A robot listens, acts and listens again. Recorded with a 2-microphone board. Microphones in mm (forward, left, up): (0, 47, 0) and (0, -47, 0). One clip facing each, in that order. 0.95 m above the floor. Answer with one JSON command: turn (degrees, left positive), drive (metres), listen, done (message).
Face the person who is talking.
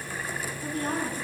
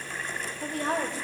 {"turn": -90}
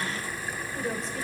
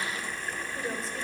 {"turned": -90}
{"done": "Found it: a woman speaking, straight ahead, 2 to 4 m away."}